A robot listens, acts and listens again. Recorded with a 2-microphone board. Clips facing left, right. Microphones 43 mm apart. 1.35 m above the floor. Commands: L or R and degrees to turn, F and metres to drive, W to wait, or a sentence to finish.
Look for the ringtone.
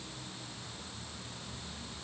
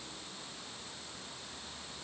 W
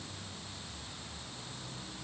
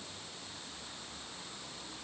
W
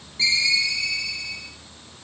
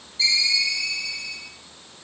L40
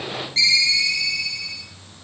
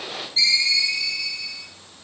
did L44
L100
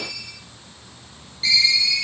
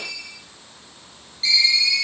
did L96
Found it: a ringtone, straight ahead.